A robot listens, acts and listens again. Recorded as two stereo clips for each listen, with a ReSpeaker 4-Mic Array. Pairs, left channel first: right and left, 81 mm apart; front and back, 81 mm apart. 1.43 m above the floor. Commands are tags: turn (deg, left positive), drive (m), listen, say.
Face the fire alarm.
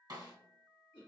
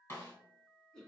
<listen/>
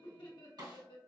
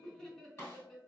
<listen/>
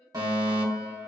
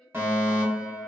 <turn deg="120"/>
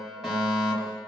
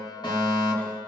<say>Facing the fire alarm, 1 to 2 m away.</say>